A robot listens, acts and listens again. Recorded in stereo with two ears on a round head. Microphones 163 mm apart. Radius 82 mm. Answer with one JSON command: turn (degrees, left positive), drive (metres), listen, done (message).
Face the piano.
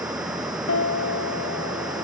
{"turn": 90}
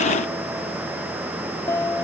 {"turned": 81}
{"turn": 15}
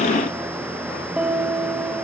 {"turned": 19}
{"done": "Facing the piano, 1 to 2 m away."}